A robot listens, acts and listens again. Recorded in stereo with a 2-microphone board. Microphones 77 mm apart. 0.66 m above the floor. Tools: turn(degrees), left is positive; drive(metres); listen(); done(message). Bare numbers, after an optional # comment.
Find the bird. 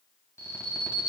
listen()
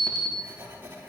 listen()
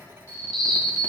turn(30)
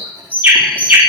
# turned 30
# So it is at 25° right.
turn(-25)
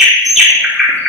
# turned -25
done("Found it: a bird, straight ahead.")